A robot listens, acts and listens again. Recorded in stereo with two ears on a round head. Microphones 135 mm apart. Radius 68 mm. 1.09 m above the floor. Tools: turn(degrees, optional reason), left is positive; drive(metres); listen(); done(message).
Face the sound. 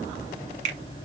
turn(degrees=-50, reason="The finger snap: about 50° right or 130° right.")
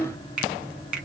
done("Facing the finger snap.")